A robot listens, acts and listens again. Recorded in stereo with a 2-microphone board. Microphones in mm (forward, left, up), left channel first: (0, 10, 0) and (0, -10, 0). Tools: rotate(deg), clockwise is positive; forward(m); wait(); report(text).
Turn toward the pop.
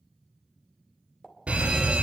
rotate(-25)
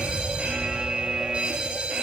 wait()
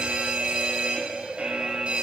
report("I heard a pop, but can't make it out now. It was about straight ahead or 130° left.")